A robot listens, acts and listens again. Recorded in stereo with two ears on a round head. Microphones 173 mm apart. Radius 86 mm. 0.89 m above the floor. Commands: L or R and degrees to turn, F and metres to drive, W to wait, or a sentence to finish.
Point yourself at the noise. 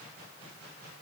W
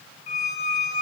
L40
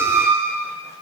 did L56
R15
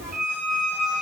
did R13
Found it: a squeak, straight ahead.